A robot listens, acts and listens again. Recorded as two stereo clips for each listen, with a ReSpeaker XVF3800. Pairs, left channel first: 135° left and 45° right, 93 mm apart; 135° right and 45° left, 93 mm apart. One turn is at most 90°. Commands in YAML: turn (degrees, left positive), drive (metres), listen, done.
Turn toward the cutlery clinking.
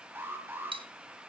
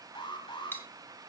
turn: -65
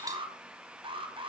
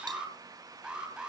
listen: true
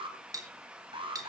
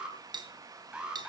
done: "Found it: cutlery clinking, straight ahead, 2 to 4 m away."